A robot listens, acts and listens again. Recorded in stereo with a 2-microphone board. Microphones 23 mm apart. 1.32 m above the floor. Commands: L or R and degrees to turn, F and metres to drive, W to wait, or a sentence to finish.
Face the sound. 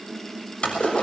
L50
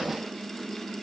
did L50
W
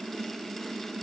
I heard a splash, but can't make it out now. It was about straight ahead or 80° left.